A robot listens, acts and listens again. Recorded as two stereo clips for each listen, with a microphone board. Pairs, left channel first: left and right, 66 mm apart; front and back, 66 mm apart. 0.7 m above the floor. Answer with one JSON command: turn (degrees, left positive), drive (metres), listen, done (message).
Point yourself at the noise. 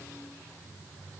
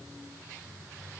{"listen": true}
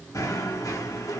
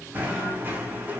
{"turn": 120}
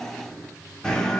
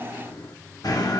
{"turn": 10}
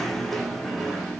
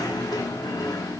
{"done": "Found it: knocking, straight ahead, 1 to 2 m away."}